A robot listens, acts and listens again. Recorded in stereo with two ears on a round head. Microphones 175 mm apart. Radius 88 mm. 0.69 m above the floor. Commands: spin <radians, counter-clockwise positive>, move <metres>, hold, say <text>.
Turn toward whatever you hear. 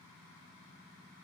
hold
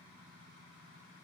hold
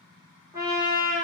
spin -0.35
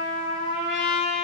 say Facing the trumpet.